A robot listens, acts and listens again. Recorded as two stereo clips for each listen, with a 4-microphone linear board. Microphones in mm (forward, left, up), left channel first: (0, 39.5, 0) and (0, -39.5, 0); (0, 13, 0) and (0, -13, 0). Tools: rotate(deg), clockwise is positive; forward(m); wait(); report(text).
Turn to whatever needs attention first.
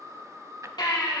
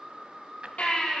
rotate(-75)
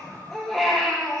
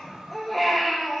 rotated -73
report("Found it: a baby crying, straight ahead, over 4 m away.")